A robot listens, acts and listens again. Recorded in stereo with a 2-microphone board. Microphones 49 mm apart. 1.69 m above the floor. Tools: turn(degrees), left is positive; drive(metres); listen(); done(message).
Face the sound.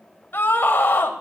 turn(degrees=50)
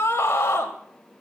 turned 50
turn(degrees=80)
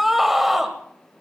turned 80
done("Facing the scream, 1 to 2 m away.")